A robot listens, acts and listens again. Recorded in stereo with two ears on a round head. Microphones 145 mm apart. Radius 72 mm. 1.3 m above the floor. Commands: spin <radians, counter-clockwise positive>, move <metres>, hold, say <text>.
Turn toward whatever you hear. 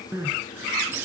spin -0.52
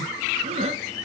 spin -2.27
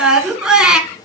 say Facing the crying.